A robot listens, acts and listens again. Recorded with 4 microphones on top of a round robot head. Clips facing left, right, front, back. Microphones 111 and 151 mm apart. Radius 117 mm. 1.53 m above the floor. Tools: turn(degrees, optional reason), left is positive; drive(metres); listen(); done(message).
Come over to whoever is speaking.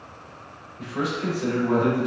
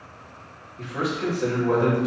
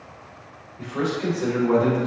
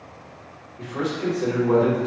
turn(degrees=-115, reason="The man speaking: 115° right.")
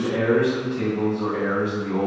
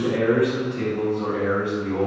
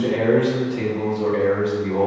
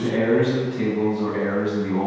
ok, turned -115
turn(degrees=-20, reason="The man speaking is now 20° right.")
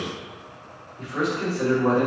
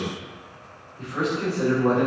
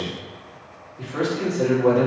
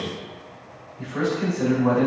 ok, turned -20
drive(metres=1.0)
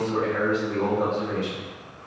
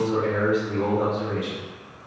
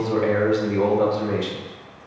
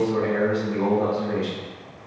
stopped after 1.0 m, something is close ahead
turn(degrees=-10, reason="The man speaking is now 10° right.")
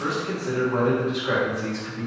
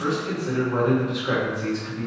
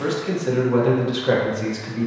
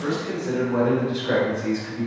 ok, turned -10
done("Arrived at the man speaking, straight ahead.")